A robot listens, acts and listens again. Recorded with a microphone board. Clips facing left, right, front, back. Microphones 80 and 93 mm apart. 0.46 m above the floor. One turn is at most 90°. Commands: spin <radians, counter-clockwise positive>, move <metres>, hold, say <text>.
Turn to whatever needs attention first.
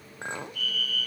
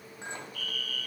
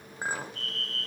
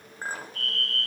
spin 1.57
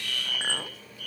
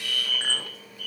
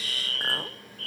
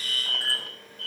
spin 1.57
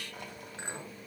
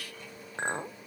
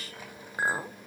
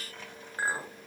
spin 0.44
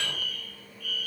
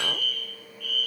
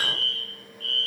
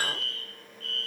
say Found it: a fire alarm, straight ahead, over 4 m away.